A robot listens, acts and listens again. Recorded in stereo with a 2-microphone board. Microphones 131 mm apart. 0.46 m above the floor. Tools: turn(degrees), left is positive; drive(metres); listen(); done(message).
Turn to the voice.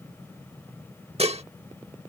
listen()
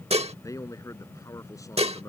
turn(degrees=25)
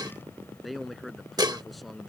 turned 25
done("Facing the man speaking.")